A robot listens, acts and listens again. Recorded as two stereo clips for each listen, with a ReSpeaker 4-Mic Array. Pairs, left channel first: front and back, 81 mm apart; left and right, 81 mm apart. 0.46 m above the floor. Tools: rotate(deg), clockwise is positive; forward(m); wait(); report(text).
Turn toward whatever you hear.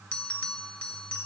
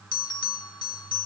rotate(-75)
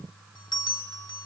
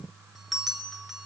report("Found it: a bell, straight ahead.")